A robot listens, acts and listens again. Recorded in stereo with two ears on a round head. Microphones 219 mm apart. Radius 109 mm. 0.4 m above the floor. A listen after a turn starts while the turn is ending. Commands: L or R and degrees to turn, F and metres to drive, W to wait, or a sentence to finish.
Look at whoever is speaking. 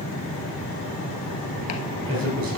R70
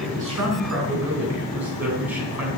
Facing the man speaking, 2 to 4 m away.